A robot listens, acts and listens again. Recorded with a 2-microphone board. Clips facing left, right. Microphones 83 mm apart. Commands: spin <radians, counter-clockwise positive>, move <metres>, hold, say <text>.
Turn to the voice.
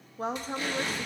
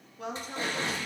spin 0.61
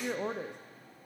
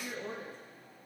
spin 1.83
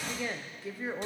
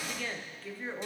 spin 0.26
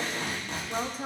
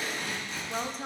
spin 0.17
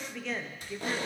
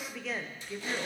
say Facing the woman speaking.